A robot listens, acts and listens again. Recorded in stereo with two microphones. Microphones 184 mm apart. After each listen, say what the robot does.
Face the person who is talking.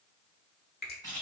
Keep listening.
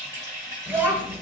Turn 30° right.
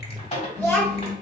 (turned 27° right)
Turn 15° left.
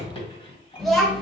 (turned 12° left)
Found it: a child speaking, straight ahead.